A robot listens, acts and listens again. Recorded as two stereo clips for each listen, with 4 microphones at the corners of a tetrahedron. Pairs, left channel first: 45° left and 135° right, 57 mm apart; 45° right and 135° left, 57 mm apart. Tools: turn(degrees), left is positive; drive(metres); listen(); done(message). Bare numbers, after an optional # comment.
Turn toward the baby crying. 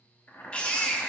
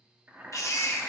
# The baby crying: 25° right.
turn(-25)
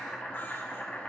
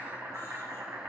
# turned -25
listen()
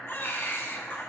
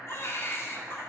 done("Found it: a baby crying, straight ahead, under 1 m away.")